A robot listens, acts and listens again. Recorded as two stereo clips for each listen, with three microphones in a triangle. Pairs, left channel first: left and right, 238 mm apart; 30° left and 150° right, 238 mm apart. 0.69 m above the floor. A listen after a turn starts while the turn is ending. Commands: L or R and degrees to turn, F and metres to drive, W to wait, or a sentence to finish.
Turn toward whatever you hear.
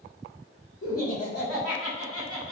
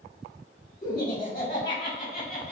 L80
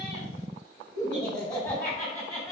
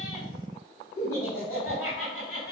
Facing the laughter.